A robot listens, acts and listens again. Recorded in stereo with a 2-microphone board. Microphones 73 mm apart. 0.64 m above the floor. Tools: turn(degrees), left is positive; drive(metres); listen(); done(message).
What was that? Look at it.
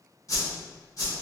turn(degrees=50)
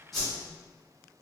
done("Facing the whoosh.")